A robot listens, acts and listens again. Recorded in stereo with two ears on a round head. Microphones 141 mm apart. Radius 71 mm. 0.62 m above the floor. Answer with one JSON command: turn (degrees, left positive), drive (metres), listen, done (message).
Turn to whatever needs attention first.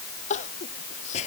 {"turn": 50}
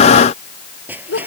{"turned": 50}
{"turn": 80}
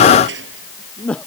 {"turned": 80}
{"done": "Facing the crying."}